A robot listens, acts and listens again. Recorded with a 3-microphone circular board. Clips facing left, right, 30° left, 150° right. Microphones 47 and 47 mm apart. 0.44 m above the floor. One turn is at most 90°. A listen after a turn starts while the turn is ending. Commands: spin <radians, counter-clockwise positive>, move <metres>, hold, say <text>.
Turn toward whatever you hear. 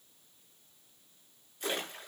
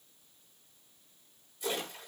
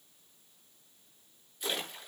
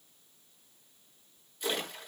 spin 1.57
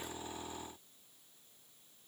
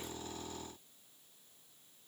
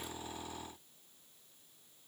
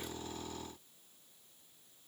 spin 0.44
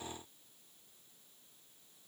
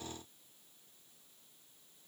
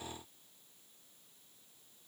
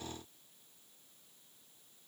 say I heard a splash from this way, but can't make it out now.